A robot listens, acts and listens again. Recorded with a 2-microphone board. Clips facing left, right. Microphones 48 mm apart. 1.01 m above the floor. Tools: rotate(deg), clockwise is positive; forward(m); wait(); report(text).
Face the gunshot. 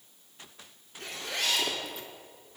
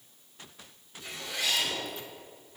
wait()
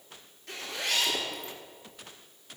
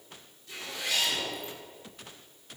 wait()
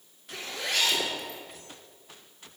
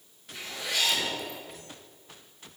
report("I can't make out a gunshot, only a zipper.")